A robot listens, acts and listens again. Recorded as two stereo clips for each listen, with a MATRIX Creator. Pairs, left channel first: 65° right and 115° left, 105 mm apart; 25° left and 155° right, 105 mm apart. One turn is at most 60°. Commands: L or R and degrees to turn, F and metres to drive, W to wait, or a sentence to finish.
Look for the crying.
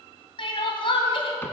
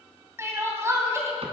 R60
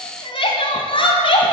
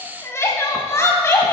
R40
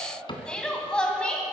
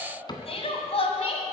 L15
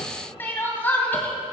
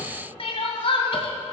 Facing the crying, 2 to 4 m away.